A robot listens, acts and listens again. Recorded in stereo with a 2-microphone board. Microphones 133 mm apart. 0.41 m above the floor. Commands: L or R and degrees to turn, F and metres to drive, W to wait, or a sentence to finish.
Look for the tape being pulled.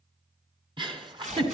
R65
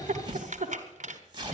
R40
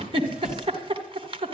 W
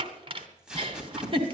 Facing the tape being pulled.